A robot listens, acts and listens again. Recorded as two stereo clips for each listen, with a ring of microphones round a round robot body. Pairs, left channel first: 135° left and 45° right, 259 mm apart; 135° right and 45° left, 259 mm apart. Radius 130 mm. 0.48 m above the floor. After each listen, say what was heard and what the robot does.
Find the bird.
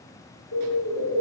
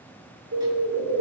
The bird: 95° left. Turn 95° left.
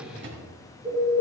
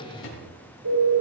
The bird is now 30° left. Turn 30° left.
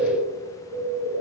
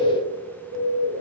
Facing the bird, over 4 m away.